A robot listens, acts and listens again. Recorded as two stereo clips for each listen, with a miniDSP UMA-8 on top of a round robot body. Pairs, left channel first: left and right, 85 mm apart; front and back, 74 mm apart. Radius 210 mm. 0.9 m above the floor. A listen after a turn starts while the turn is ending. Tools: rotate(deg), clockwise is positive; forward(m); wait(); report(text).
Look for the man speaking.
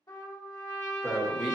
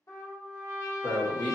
report("Found it: a man speaking, straight ahead.")